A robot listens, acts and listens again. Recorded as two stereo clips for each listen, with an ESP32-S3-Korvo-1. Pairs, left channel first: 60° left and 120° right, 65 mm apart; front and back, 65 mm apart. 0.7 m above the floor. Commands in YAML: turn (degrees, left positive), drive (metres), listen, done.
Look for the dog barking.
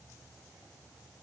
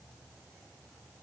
listen: true
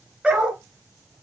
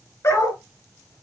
turn: -45
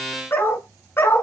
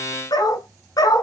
turn: 10
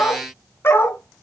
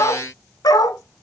turn: 10
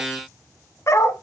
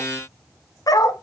turn: 20
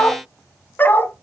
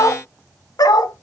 done: "Facing the dog barking."